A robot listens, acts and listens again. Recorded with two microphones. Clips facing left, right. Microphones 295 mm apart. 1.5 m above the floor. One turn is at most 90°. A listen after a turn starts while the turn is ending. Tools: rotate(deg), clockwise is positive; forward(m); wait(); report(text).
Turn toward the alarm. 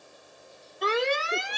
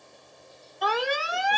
rotate(-25)
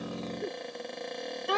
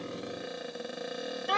rotate(-90)
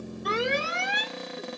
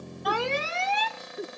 rotate(-15)
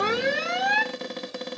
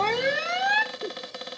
report("Found it: an alarm, straight ahead.")